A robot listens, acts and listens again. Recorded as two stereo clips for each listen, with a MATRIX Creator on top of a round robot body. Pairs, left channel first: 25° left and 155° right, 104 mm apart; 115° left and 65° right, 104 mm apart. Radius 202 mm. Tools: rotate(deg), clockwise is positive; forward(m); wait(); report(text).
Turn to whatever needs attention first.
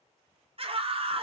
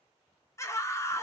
rotate(-175)
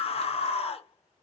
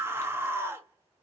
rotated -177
report("Facing the scream, 1 to 2 m away.")